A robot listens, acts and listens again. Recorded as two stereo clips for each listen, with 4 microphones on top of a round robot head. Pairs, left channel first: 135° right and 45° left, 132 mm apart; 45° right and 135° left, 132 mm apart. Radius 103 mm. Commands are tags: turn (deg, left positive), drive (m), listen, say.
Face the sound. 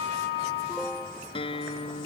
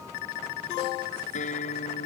<turn deg="-80"/>
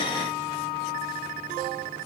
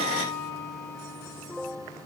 <listen/>
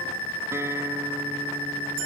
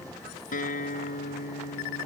<turn deg="-25"/>
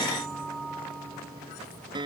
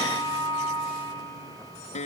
<turn deg="-10"/>
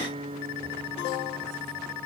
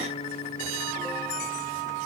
<say>Found it: a guitar, straight ahead.</say>